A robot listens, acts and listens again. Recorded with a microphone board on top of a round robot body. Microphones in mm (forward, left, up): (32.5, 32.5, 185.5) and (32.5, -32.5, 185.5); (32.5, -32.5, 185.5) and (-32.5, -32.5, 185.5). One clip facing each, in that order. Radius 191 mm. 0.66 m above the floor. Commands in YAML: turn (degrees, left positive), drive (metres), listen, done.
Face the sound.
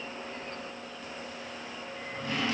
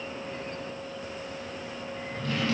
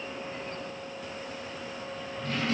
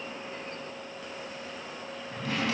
turn: 165
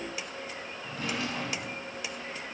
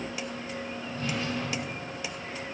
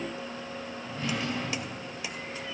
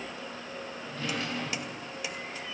turn: 80
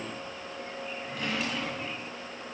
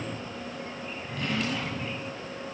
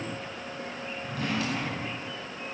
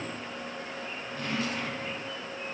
done: "Found it: a drawer, straight ahead, 1 to 2 m away."